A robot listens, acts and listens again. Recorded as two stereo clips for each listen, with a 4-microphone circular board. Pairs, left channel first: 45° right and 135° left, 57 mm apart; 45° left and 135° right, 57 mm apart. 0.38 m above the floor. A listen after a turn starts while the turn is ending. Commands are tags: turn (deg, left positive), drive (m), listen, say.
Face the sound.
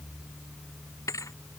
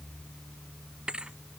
<turn deg="-60"/>
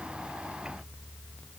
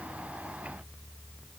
<say>I heard a thud from this way, but can't make it out now.</say>